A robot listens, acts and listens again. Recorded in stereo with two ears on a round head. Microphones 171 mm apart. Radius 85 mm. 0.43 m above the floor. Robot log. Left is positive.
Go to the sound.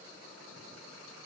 cmd idle
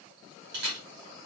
note: The camera shutter: about 60° right or 120° right.
cmd yaw -60
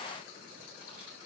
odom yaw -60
cmd idle
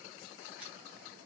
cmd idle
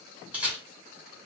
note: So it is at 10° right.
cmd yaw -10
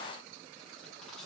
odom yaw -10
cmd idle
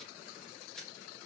cmd idle
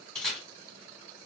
cmd fwd 1.0
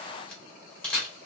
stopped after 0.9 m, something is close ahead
end: I am next to the camera shutter.